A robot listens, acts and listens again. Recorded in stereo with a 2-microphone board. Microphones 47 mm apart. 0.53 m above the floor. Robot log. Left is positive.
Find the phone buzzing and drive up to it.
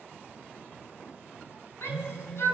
note: The phone buzzing: about 60° left or 120° left.
cmd yaw +60
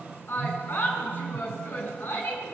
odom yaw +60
cmd fwd 1.0
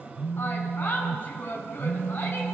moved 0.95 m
cmd fwd 1.0
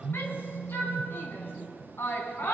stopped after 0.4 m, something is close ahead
end: Arrived at the phone buzzing, straight ahead.